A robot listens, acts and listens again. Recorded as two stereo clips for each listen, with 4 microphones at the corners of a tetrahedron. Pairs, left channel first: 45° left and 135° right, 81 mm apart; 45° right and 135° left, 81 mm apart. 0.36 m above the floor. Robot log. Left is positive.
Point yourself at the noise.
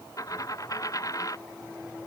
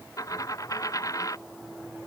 end: Facing the dropped coin.